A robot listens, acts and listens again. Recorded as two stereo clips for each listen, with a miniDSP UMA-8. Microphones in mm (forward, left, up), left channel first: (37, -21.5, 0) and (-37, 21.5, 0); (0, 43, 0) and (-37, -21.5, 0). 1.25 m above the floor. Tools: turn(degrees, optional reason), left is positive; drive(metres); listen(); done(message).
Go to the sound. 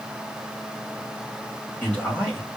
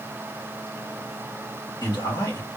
turn(degrees=45, reason="The man speaking: 45° left.")
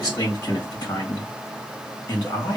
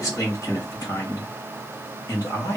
turn(degrees=15, reason="The man speaking is now 15° left.")
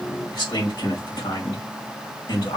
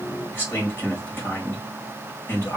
drive(metres=1.0)
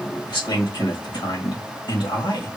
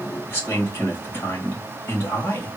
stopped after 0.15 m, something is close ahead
done("Blocked. The man speaking is further on, straight ahead.")